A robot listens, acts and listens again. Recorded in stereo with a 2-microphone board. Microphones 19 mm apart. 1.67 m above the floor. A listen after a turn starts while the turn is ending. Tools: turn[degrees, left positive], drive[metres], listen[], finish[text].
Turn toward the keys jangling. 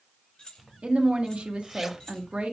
Thought: The keys jangling: about 40° left or 140° left.
Action: turn[40]
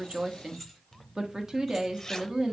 Action: finish[Facing the keys jangling, 2 to 4 m away.]